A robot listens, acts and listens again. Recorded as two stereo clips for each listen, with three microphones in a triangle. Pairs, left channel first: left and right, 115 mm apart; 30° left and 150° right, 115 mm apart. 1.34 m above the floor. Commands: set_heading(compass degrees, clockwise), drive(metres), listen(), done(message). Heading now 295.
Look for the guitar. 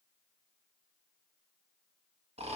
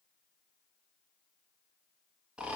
listen()
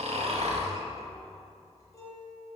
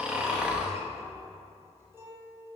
set_heading(150)
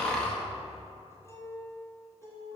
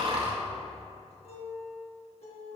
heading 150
set_heading(125)
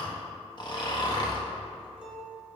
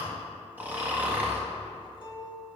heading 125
set_heading(135)
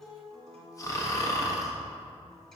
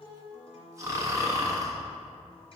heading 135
done("Facing the guitar, 2 to 4 m away.")